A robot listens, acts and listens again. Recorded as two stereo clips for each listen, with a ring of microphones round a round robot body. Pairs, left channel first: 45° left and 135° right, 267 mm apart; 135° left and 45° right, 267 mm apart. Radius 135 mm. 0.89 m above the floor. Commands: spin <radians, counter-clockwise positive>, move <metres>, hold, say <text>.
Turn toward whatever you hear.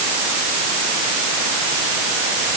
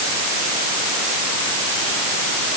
hold
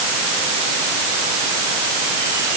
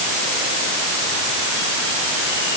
hold
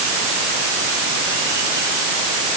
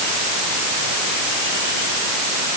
say I can't make out anything.